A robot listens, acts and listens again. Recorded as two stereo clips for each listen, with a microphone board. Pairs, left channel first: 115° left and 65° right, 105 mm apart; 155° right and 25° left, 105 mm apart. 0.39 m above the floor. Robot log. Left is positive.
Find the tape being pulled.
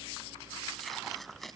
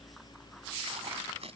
note: The tape being pulled: 25° left.
cmd yaw +25
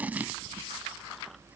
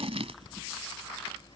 end: Facing the tape being pulled.